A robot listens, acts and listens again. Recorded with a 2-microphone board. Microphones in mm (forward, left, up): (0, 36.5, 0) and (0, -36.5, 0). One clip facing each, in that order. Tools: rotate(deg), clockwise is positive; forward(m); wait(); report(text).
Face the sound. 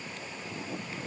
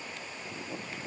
wait()
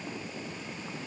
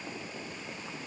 wait()
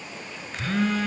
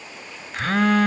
rotate(60)
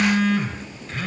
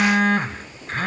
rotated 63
rotate(50)
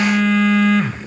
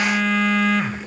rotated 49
report("Found it: a phone buzzing, straight ahead.")